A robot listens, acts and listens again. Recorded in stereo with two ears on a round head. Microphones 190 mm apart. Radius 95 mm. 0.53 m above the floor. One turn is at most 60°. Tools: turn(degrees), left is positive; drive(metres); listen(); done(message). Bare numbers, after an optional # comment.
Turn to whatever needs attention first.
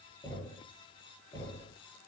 listen()
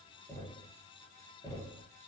listen()
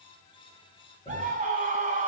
# The scream: about 40° right or 140° right.
turn(-40)
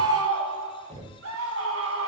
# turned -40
# So it is at 100° right.
turn(-60)
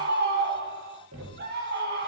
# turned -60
# The scream is now 50° right.
turn(-50)
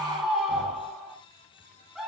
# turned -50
done("Found it: a scream, straight ahead, over 4 m away.")